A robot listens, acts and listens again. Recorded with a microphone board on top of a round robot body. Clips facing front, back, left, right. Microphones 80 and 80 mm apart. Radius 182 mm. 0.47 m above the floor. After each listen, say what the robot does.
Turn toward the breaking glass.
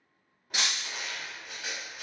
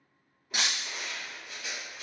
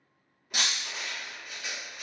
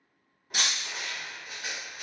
Turn 105° left.
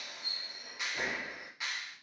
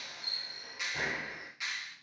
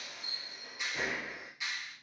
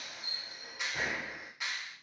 Facing where the breaking glass came from. I can't hear it now.